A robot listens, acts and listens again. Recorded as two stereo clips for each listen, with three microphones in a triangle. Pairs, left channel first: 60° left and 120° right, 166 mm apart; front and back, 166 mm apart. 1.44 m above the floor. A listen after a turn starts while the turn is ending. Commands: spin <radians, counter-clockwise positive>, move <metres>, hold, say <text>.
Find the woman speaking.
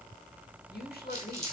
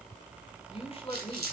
spin 0.96
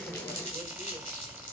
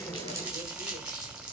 hold
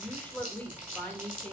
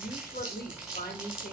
spin -0.35
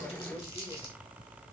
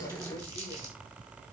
hold
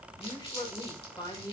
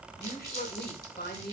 say Facing the woman speaking, 2 to 4 m away.